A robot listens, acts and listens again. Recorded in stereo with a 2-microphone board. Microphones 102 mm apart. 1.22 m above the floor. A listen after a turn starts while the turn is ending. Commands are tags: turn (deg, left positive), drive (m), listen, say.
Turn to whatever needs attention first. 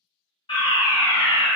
<turn deg="60"/>
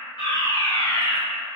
<turn deg="45"/>
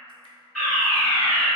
<say>Found it: a fire alarm, straight ahead.</say>